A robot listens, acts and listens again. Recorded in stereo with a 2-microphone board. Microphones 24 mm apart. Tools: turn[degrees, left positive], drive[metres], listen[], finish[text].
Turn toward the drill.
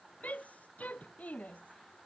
Action: listen[]
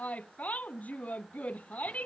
Action: listen[]
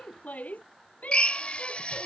Thought: The drill: about 50° left or 130° left.
Action: turn[50]
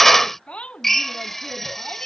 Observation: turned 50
Thought: So it is at 15° left.
Action: turn[15]
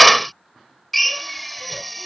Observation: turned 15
Action: finish[Found it: a drill, straight ahead.]